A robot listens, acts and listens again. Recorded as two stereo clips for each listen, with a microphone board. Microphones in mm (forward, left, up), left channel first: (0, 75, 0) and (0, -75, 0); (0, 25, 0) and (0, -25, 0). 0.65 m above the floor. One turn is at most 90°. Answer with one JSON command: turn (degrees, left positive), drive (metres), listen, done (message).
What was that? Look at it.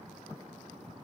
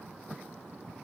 {"listen": true}
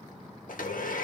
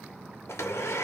{"turn": 75}
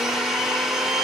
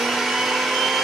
{"done": "Found it: a blender, straight ahead."}